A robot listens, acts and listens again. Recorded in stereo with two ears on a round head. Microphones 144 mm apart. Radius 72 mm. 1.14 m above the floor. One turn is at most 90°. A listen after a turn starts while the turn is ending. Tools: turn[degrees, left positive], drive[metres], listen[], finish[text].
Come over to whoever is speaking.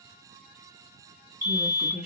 Action: turn[-30]
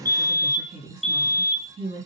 Thought: So it is at 140° right.
Action: turn[-90]
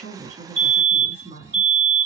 Thought: The woman speaking is now 40° right.
Action: turn[-40]
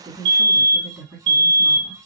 Action: drive[1.0]
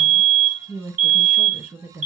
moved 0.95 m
Thought: The woman speaking is now 10° right.
Action: turn[-10]
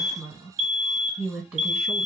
Action: drive[1.0]
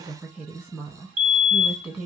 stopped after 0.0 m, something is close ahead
Action: finish[Arrived at the woman speaking, straight ahead.]